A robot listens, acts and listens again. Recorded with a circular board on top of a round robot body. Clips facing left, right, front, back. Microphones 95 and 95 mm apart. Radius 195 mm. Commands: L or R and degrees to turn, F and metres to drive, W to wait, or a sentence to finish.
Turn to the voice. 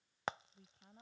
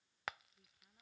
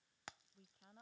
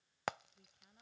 L50
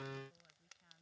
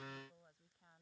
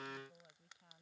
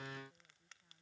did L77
R25
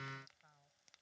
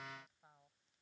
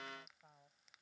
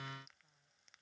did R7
R15
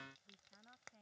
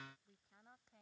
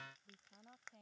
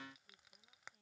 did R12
Facing the woman speaking.